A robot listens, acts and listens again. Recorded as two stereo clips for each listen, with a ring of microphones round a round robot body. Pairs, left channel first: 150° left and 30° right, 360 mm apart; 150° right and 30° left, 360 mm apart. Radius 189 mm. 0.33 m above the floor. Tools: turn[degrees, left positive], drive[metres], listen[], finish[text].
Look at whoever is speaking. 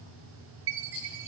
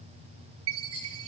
Action: listen[]
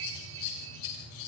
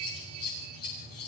Action: listen[]
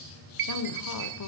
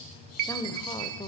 Thought: The woman speaking: 135° left.
Action: turn[135]
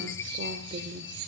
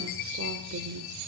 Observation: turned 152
Thought: The woman speaking is now 20° left.
Action: turn[20]
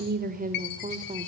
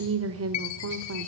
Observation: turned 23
Thought: The woman speaking is now 35° left.
Action: turn[35]
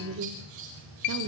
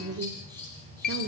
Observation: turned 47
Thought: The woman speaking is now 10° right.
Action: turn[-10]
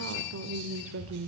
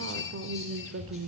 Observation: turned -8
Action: finish[Facing the woman speaking, 1 to 2 m away.]